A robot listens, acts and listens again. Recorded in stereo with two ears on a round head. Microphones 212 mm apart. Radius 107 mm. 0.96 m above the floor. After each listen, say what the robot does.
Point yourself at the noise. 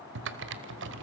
Turn 50° right.
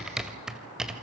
Found it: typing on a keyboard, straight ahead, 1 to 2 m away.